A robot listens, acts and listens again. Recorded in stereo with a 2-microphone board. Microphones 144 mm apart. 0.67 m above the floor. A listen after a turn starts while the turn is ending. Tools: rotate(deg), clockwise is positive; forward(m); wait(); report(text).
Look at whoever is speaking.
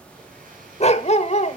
wait()
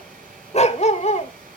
wait()
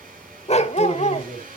rotate(-15)
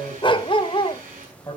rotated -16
rotate(-150)
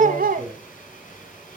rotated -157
rotate(10)
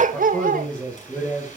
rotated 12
report("Found it: a man speaking, straight ahead, over 4 m away.")